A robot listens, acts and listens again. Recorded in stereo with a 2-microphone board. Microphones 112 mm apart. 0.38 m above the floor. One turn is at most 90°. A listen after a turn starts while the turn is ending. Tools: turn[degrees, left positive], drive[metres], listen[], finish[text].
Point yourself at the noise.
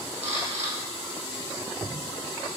Thought: The camera shutter: about 75° right or 105° right.
Action: turn[-75]
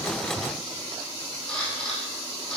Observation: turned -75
Action: finish[Facing the camera shutter, over 4 m away.]